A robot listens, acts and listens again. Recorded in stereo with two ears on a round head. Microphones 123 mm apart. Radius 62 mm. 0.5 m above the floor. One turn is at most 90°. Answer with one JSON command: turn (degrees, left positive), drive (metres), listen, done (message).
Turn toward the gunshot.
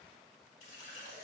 {"listen": true}
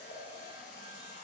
{"listen": true}
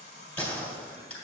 {"turn": 30}
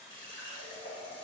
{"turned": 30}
{"listen": true}
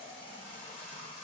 {"done": "I heard a gunshot, but can't make it out now. It was about 20° right or 140° left."}